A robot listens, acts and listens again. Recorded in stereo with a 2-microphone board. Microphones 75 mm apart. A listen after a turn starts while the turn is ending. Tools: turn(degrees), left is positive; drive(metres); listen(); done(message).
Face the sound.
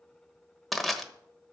turn(degrees=30)
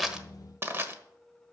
turn(degrees=-30)
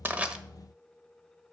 listen()
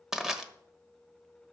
turn(degrees=-10)
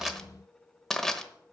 done("Found it: crushing, straight ahead.")